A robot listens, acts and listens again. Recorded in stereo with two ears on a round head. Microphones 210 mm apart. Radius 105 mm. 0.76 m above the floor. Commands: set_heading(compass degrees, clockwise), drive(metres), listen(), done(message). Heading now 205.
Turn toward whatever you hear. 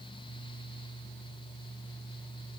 listen()
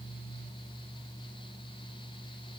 listen()
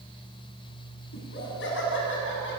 set_heading(155)
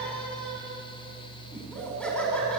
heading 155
done("Found it: laughter, straight ahead.")